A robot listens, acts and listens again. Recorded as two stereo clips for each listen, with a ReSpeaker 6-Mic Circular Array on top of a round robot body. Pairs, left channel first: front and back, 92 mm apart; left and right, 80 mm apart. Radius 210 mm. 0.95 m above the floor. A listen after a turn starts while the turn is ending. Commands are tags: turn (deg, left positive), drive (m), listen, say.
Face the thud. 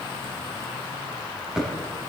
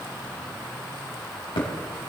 <turn deg="100"/>
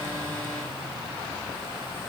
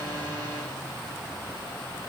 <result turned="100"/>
<say>I heard a thud from this way, but can't make it out now.</say>